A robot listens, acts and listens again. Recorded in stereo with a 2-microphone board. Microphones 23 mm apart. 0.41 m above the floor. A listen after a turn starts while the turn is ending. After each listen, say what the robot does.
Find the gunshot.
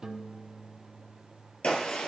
Turn 50° left.
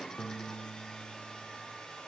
Keep listening.
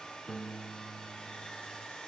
I heard a gunshot, but can't make it out now. It was about straight ahead or 80° left.